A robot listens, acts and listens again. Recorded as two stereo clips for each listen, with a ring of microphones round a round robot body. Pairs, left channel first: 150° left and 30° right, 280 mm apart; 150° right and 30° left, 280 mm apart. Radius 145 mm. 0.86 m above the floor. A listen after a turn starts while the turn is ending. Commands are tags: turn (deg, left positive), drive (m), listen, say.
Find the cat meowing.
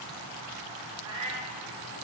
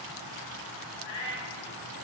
<turn deg="-100"/>
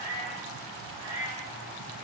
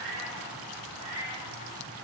<say>Found it: a cat meowing, straight ahead, 2 to 4 m away.</say>